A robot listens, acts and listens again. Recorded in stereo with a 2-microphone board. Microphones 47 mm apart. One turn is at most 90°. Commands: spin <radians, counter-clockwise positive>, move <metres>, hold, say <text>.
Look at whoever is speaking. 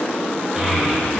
spin -0.52
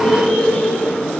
spin 0.35
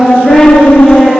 say Found it: a child speaking, straight ahead.